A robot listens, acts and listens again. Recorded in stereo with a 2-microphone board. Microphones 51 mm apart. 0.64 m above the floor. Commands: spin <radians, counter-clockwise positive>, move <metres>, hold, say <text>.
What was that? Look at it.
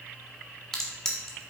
spin 0.52
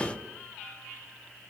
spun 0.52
hold
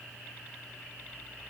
say I heard a crack, but can't make it out now. It was about 20° right or 140° left.